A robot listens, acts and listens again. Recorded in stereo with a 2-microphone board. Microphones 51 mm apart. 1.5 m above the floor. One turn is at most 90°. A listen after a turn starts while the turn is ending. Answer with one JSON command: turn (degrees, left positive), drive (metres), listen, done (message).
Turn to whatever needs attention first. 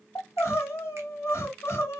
{"turn": 60}
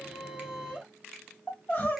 {"turn": 40}
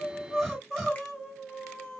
{"done": "Found it: crying, straight ahead, 2 to 4 m away."}